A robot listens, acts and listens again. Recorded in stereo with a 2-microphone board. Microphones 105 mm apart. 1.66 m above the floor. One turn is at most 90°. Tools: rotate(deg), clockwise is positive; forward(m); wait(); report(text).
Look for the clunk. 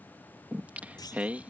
rotate(-40)
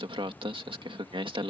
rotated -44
wait()
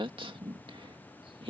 report("I heard a clunk, but can't make it out now. It was about straight ahead or 95° left.")